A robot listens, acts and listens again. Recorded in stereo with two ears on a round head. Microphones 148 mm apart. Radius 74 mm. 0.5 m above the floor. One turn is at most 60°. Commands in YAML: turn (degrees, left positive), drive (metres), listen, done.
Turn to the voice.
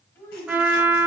turn: 30
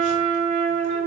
listen: true
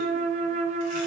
listen: true
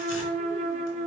done: "I heard a child speaking, but can't make it out now. It was about 15° right or 135° left."